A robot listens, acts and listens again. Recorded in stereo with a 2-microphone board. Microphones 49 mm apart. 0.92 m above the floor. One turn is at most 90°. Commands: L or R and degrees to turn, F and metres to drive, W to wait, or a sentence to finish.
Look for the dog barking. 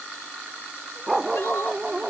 R30
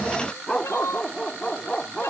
L20
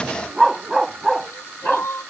Facing the dog barking.